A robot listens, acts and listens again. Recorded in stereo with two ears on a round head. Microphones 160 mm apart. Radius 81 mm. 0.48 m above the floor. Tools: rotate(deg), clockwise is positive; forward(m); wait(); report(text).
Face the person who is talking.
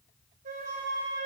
wait()
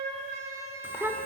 rotate(30)
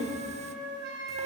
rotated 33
rotate(135)
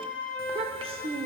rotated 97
rotate(35)
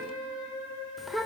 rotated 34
report("Facing the child speaking.")